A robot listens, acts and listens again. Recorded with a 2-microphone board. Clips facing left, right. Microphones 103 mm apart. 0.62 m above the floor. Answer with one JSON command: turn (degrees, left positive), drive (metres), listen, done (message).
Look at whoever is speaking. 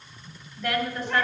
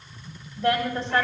{"turn": -30}
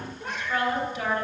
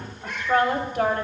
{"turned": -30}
{"turn": -120}
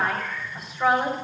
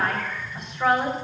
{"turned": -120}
{"done": "Facing the woman speaking, 2 to 4 m away."}